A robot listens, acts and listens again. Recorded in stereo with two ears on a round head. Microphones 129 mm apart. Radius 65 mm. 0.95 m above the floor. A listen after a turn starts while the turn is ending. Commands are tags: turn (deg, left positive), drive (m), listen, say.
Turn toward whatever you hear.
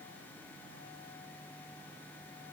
<listen/>
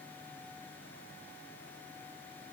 <listen/>
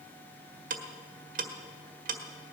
<turn deg="-60"/>
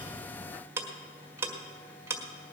<turn deg="-20"/>
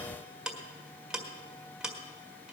<say>Facing the ticking, 1 to 2 m away.</say>